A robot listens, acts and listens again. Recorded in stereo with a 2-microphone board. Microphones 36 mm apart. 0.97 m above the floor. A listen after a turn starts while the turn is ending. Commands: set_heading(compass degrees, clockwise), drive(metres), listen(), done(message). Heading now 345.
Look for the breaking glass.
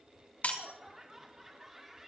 set_heading(290)
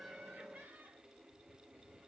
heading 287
listen()
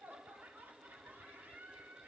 done("I heard breaking glass, but can't make it out now. It was about 5° right or 70° left.")